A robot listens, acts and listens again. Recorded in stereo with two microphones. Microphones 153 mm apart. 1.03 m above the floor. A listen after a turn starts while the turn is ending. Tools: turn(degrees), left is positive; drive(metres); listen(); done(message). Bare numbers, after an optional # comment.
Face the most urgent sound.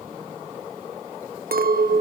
listen()
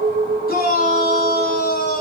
turn(90)
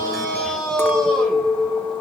done("Found it: a shout, straight ahead, over 4 m away.")